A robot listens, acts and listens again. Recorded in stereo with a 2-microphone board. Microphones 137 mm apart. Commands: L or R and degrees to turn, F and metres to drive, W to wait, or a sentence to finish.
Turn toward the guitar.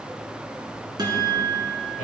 R30
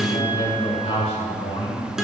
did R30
Found it: a guitar, straight ahead.